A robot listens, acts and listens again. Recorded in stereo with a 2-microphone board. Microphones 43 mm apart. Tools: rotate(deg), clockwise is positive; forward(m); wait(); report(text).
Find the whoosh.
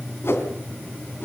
rotate(-70)
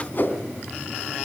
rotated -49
rotate(-50)
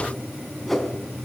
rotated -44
report("Found it: a whoosh, straight ahead, 2 to 4 m away.")